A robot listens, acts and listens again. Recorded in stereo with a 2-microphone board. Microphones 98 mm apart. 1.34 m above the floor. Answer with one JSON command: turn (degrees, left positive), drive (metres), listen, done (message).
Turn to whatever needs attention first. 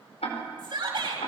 {"turn": -50}
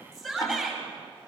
{"done": "Facing the shout, over 4 m away."}